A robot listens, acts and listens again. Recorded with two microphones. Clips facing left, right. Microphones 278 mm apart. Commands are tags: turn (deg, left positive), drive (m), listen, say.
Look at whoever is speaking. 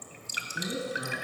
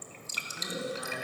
<turn deg="30"/>
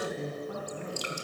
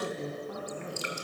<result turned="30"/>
<say>Found it: a woman speaking, straight ahead, over 4 m away.</say>